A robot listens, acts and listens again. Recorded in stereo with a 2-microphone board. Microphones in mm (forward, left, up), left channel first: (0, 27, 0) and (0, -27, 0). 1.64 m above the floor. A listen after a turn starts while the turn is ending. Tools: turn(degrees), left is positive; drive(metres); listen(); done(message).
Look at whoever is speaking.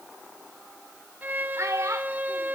turn(degrees=-65)
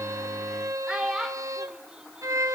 turn(degrees=-15)
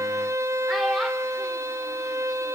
listen()
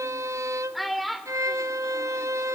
done("Found it: a child speaking, straight ahead.")